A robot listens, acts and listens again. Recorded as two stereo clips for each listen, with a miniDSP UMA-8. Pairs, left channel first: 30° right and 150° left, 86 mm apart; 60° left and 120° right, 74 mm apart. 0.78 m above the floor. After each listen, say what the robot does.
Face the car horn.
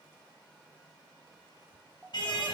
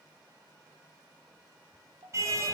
Turn 65° right.
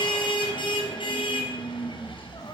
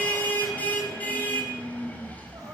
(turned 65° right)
Turn 10° right.
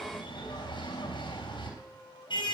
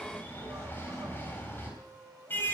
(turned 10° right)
Facing the car horn.